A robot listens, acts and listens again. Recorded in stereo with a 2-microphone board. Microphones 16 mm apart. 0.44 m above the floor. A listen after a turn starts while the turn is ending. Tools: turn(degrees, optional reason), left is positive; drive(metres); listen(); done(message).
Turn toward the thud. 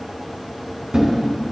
turn(degrees=-45, reason="The thud: about 45° right or 135° right.")
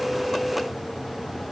listen()
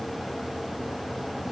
done("I heard a thud, but can't make it out now. It was about straight ahead or 90° right.")